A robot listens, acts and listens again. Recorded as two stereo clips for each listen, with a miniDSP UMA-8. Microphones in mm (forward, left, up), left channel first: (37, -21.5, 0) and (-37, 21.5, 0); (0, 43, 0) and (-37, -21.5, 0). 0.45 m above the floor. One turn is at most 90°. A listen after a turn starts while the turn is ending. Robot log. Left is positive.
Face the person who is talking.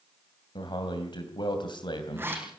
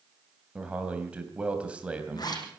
note: The man speaking: 45° right.
cmd yaw -45
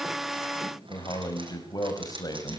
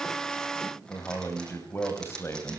end: Found it: a man speaking, straight ahead, 2 to 4 m away.